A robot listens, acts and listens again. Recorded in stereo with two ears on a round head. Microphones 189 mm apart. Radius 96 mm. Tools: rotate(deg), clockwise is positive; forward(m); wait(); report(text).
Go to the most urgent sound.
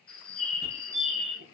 rotate(50)
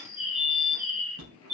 rotate(80)
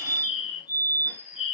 rotate(-25)
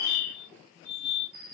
forward(1.0)
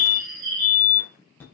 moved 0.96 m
rotate(-10)
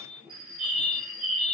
forward(1.0)
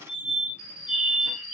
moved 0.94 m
forward(1.0)
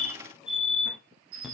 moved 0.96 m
forward(1.0)
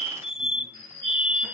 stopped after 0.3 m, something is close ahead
report("I am next to the fire alarm.")